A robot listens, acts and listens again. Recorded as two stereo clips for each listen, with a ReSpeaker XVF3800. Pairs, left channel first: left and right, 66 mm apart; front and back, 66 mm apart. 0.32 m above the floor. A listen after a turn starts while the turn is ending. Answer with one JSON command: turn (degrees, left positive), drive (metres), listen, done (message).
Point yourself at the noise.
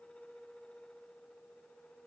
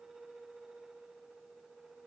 {"listen": true}
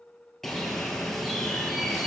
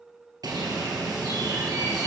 {"turn": 175}
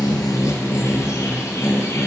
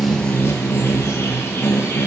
{"turn": 50}
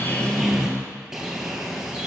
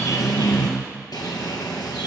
{"turn": -10}
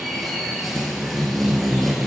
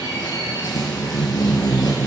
{"done": "Facing the bird."}